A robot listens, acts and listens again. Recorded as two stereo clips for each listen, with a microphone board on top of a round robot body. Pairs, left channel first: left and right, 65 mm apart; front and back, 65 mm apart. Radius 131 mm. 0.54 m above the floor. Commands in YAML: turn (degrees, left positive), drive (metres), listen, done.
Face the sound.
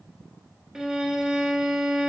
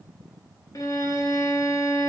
turn: -10
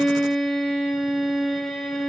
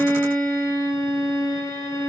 done: "Facing the violin, 1 to 2 m away."